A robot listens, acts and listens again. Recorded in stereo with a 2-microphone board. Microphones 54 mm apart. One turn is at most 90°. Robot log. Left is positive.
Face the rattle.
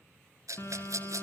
cmd yaw -90
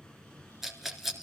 end: Facing the rattle.